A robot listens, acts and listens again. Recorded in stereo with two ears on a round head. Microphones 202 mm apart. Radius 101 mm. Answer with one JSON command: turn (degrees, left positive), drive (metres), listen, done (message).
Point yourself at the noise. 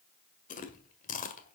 {"turn": 35}
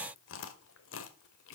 {"turn": 105}
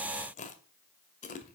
{"turn": 35}
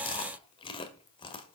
{"turn": 25}
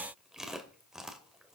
{"done": "Facing the chewing."}